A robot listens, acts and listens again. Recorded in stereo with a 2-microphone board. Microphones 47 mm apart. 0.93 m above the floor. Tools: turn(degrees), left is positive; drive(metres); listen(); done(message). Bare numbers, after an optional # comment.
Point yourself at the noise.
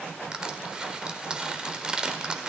# The crushing: about 15° right or 165° right.
turn(-15)
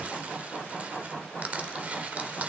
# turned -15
# So it is at 150° right.
turn(-150)
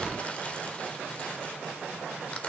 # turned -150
listen()
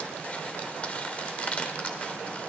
# The crushing is now 35° left.
turn(35)
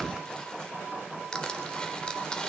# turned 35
# The crushing is now 20° left.
turn(20)
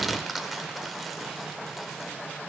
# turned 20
done("Found it: crushing, straight ahead, 1 to 2 m away.")